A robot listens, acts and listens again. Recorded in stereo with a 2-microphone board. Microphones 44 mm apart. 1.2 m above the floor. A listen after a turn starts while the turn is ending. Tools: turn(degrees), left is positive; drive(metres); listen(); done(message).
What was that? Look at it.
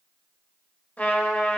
turn(degrees=35)
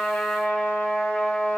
turn(degrees=105)
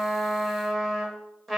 done("Facing the trumpet.")